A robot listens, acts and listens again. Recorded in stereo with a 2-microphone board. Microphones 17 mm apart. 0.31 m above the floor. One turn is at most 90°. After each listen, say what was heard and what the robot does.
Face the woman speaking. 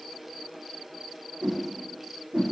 Keep listening.
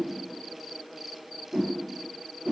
Keep listening.
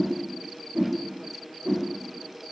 I can't make out a woman speaking to turn to.